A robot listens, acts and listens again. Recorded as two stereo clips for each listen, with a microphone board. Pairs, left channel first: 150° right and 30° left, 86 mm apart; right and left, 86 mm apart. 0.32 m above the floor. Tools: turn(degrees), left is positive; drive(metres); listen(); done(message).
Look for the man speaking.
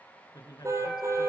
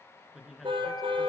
turn(degrees=175)
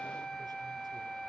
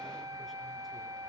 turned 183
turn(degrees=-10)
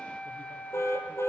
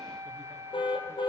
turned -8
listen()
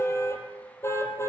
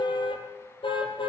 done("I heard a man speaking from this way, but can't make it out now.")